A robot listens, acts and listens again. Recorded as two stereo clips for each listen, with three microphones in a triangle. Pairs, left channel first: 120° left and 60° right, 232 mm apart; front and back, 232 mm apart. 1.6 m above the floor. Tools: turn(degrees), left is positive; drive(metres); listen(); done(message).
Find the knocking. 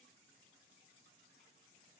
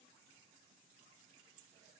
listen()
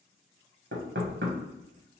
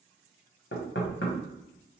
turn(degrees=-30)
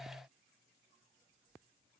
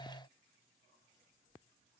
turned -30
listen()
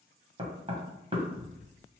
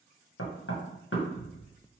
done("Found it: knocking, straight ahead.")